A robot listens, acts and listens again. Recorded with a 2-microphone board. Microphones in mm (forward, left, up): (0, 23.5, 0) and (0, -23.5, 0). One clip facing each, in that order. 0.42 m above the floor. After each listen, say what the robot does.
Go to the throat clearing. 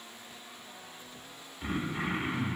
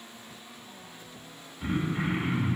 Turn 30° right.
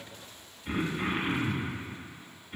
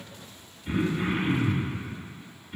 Turn 15° left.
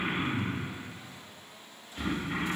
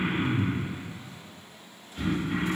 Drive 1.0 m forward.
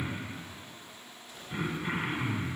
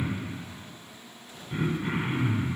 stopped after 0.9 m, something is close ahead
Arrived at the throat clearing, straight ahead.